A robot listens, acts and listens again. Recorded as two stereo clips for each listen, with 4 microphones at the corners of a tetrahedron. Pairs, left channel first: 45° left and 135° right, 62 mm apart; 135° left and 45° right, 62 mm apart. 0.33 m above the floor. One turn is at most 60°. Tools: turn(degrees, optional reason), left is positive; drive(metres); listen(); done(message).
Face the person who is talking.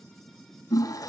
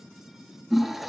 listen()
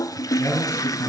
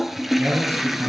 done("Found it: a man speaking, straight ahead.")